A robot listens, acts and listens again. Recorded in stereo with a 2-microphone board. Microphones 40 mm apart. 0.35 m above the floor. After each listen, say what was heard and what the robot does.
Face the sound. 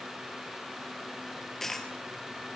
Turn 30° left.
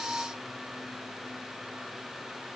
Keep listening.
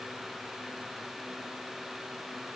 I heard a dropped coin, but can't make it out now. It was about 25° right or 145° left.